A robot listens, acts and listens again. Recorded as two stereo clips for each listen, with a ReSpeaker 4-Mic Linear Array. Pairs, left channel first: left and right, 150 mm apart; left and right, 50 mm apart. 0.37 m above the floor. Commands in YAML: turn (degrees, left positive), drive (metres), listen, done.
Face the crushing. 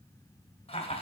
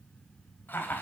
listen: true
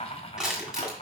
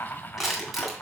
turn: -30
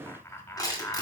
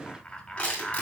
turn: 25
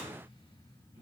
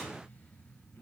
listen: true
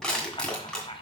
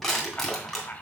done: "Found it: crushing, straight ahead, 2 to 4 m away."